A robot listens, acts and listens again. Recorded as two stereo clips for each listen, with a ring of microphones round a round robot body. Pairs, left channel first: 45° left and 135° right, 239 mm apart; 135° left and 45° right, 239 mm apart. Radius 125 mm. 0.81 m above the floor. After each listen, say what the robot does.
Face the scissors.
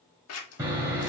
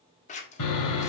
Turn 70° left.
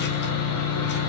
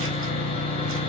Keep listening.
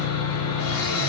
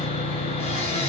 Keep listening.
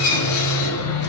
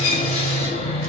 I heard scissors from this way, but can't make it out now.